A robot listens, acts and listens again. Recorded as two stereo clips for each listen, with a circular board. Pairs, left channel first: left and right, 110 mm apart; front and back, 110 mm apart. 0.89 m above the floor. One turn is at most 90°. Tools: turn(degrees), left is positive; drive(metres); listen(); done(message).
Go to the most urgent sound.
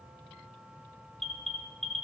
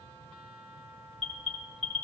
drive(metres=1.0)
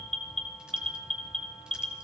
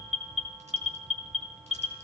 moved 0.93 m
drive(metres=1.0)
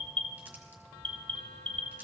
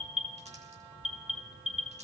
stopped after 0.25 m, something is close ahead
turn(degrees=10)
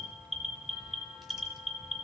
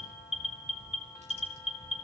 done("I am next to the alarm.")